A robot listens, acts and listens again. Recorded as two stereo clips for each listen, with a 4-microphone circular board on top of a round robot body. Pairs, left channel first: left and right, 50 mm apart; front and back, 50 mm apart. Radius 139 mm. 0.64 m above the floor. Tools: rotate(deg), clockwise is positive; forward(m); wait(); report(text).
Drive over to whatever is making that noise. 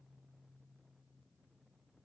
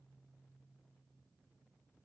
wait()
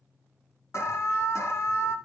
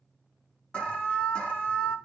rotate(-70)
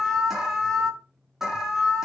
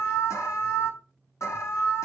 rotate(10)
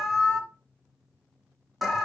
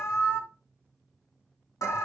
forward(1.0)
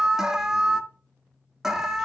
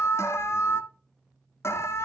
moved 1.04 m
rotate(10)
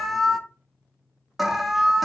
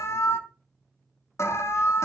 forward(1.0)
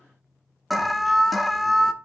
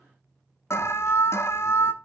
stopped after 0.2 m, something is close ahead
report("Arrived at the alarm, straight ahead.")